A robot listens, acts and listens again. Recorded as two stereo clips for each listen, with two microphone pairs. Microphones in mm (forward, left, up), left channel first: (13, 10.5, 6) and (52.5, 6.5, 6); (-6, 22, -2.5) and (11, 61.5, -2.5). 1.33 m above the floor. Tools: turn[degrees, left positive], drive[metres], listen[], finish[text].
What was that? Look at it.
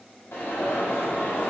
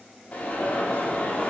Thought: The alarm: 170° right.
Action: turn[-170]
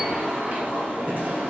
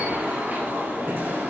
Thought: The alarm is now 35° left.
Action: turn[35]
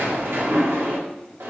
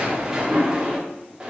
Action: finish[Found it: an alarm, straight ahead, 2 to 4 m away.]